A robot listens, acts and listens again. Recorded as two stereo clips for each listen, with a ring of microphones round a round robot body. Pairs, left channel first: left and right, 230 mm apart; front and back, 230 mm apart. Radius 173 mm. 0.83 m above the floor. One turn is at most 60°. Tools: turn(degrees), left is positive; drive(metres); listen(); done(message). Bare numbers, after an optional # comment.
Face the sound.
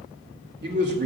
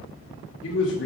# The man speaking: 45° right.
turn(-45)
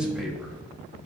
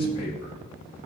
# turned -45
done("Facing the man speaking.")